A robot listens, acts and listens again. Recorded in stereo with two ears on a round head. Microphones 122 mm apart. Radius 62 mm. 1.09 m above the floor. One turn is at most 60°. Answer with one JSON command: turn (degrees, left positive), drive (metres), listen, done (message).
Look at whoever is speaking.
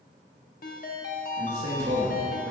{"turn": -50}
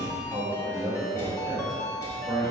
{"done": "Found it: a man speaking, straight ahead."}